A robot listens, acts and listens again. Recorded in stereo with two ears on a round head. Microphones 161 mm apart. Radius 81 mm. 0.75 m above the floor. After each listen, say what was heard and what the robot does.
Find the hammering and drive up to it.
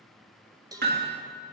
The hammering: about 55° right or 125° right. Turn 55° right.
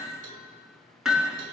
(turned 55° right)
Drive 1.0 m forward.
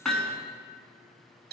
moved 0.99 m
Drive 1.0 m forward.
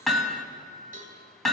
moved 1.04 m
Drive 1.0 m forward.
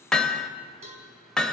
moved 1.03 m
Drive 1.0 m forward.
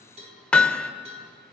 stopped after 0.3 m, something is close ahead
I am next to the hammering.